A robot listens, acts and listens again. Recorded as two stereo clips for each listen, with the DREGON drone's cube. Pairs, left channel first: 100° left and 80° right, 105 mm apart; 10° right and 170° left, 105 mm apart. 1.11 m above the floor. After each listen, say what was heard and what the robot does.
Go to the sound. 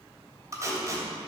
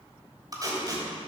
The tape being pulled: 140° right. Turn 140° right.
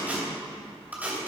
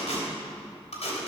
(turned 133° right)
Drive 1.0 m forward.
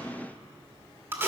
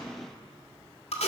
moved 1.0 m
The tape being pulled is now 10° right. Turn 10° right.
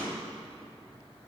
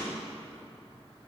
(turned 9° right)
Keep listening.
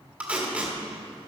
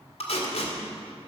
Drive 1.0 m forward.
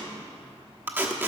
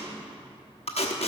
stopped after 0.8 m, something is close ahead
The tape being pulled is now 10° right. Turn 10° right.
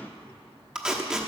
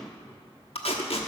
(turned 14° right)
Arrived at the tape being pulled, straight ahead.